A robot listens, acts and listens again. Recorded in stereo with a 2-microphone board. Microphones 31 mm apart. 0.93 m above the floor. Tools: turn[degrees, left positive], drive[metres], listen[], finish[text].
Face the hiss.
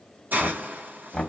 Thought: The hiss: about 70° right or 110° right.
Action: turn[-70]
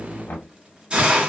Thought: So it is at 35° right.
Action: turn[-35]
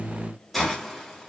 Action: listen[]
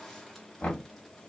Action: listen[]
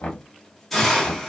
Action: finish[Found it: a hiss, straight ahead, 2 to 4 m away.]